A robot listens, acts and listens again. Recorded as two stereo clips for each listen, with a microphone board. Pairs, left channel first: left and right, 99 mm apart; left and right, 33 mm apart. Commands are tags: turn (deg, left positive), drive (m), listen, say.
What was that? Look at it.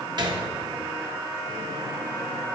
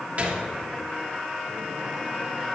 <turn deg="-45"/>
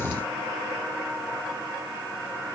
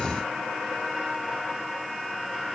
<listen/>
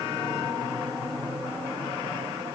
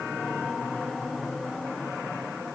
<say>I heard a gunshot, but can't make it out now. It was about straight ahead or 90° right.</say>